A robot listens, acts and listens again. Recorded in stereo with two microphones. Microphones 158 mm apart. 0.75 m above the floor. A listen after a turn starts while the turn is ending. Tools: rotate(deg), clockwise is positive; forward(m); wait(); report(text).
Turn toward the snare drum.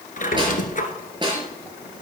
rotate(30)
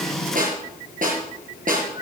rotate(120)
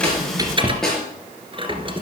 report("Facing the snare drum.")